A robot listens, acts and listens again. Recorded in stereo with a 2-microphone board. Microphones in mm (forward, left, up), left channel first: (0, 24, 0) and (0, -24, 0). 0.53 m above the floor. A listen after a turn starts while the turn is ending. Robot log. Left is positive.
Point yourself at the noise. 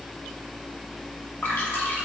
note: The dripping: about 40° left or 140° left.
cmd yaw +40
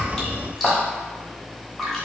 end: Found it: dripping, straight ahead, 1 to 2 m away.